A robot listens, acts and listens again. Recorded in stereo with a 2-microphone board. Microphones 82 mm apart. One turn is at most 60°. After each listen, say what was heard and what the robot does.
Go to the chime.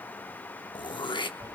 Keep listening.
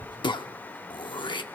Keep listening.
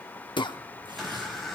Turn 30° left.
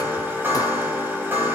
So it is at 30° right. Turn 30° right.
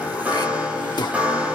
The chime is now 20° right. Turn 20° right.
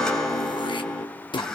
Drive 1.0 m forward.
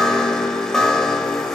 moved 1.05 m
Drive 1.0 m forward.
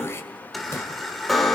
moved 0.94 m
Drive 1.0 m forward.
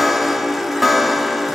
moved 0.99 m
Drive 1.0 m forward.
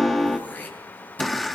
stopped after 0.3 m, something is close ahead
Arrived at the chime, straight ahead.